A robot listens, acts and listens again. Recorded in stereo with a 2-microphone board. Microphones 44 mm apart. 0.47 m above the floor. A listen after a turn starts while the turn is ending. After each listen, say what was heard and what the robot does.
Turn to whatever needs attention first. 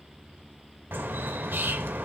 Keep listening.
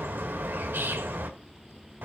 Keep listening.
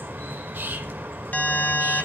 The alarm: about 45° left or 135° left. Turn 45° left.
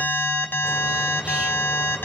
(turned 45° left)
So it is at 80° left. Turn 80° left.
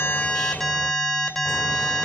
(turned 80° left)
The alarm is now 10° left. Turn 10° left.
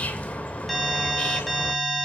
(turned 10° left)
Found it: an alarm, straight ahead, 1 to 2 m away.